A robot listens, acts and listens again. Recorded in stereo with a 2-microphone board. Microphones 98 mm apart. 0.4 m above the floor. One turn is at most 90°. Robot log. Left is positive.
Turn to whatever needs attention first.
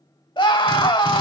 note: The scream: about 55° left or 125° left.
cmd yaw +55
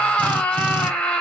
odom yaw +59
note: So it is at 15° left.
cmd yaw +15
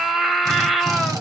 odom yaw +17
end: Found it: a scream, straight ahead.